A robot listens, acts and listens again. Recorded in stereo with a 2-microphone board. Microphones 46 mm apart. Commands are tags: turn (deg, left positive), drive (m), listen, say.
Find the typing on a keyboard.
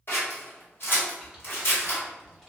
<turn deg="30"/>
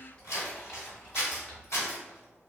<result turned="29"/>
<turn deg="155"/>
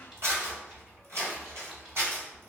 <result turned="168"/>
<turn deg="-15"/>
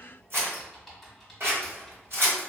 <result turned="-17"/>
<say>Facing the typing on a keyboard, 1 to 2 m away.</say>